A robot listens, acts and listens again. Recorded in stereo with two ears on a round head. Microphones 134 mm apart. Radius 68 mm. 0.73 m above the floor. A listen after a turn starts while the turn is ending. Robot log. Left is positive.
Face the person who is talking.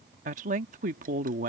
note: The woman speaking: about 50° right or 130° right.
cmd yaw -50
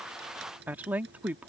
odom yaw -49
note: So it is at 10° right.
cmd yaw -10
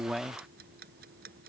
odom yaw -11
end: Facing the woman speaking.